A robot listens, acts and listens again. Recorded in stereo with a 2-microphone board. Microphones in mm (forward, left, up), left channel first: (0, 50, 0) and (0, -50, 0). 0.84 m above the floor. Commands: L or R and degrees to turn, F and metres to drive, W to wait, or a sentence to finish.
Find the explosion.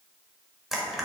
W
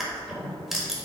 W
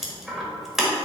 I can't make out an explosion to turn to.